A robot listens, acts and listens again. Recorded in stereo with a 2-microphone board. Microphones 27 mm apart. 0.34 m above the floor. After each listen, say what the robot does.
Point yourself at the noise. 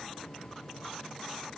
Keep listening.
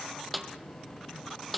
Turn 30° left.
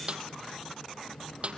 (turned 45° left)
Turn 45° right.
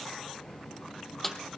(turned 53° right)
Turn 10° left.
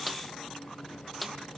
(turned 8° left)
Found it: a snare drum, straight ahead.